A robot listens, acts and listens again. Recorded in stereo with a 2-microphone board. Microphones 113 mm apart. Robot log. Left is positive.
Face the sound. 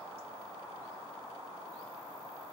cmd idle
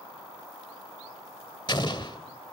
note: The explosion: about 45° left or 135° left.
cmd yaw +45
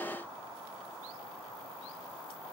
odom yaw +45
cmd idle
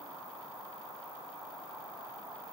end: I heard an explosion, but can't make it out now. It was about straight ahead or 90° left.